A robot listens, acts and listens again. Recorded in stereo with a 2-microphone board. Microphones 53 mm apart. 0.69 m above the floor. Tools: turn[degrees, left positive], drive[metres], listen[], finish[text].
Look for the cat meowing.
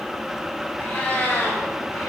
Thought: The cat meowing: about 40° left or 140° left.
Action: turn[40]
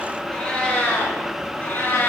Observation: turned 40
Thought: The cat meowing: about 35° left or 145° left.
Action: turn[35]
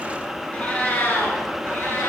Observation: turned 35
Thought: The cat meowing: about 40° left or 140° left.
Action: turn[40]
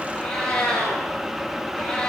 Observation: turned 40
Thought: So it is at 10° left.
Action: turn[10]
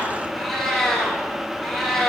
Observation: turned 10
Action: finish[Facing the cat meowing, 1 to 2 m away.]